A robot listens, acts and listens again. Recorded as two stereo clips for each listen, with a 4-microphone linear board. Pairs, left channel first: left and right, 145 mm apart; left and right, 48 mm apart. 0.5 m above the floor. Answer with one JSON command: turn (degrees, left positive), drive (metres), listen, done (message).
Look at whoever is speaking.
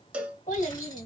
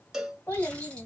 {"turn": 70}
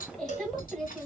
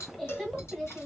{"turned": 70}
{"done": "Facing the child speaking."}